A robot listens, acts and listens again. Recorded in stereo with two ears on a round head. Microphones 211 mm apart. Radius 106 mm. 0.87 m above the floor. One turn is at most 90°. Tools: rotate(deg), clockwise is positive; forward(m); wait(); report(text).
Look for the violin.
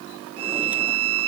rotate(65)
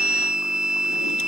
report("Facing the violin.")